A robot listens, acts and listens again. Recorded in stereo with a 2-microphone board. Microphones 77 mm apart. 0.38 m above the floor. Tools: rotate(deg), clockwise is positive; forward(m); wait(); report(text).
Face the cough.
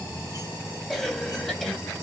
rotate(-30)
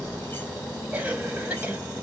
rotate(20)
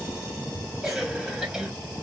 report("Facing the cough, 2 to 4 m away.")